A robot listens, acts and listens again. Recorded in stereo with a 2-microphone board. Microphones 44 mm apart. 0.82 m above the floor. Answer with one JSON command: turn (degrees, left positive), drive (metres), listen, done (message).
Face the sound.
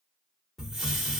{"turn": -30}
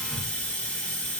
{"turn": 20}
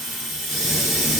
{"done": "Facing the hiss, 1 to 2 m away."}